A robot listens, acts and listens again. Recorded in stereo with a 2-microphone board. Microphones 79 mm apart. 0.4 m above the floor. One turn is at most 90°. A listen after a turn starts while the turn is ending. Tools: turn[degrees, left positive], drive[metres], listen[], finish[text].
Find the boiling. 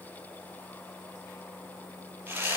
Action: listen[]
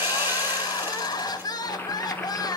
Thought: The boiling: about 25° left or 155° left.
Action: turn[25]
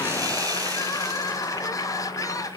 Thought: So it is at 135° left.
Action: turn[90]
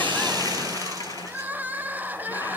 Thought: Nothing new. It was at 45° left.
Action: turn[45]
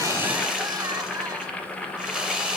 Thought: The boiling is now 10° left.
Action: turn[10]
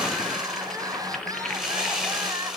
Action: finish[Facing the boiling.]